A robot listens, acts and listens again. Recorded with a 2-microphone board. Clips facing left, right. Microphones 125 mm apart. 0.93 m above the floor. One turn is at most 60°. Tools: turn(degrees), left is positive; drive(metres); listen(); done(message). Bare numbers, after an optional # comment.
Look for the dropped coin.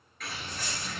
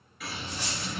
turn(-60)
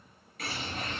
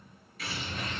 # Nothing new. It was at 30° right.
turn(-30)
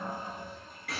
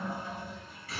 done("Facing where the dropped coin came from. I can't hear it now.")